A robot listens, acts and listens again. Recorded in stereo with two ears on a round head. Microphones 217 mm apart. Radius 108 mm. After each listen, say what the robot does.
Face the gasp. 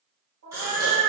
Turn 30° right.
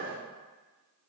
Keep listening.
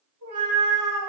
I heard a gasp, but can't make it out now. It was about 20° left or 140° right.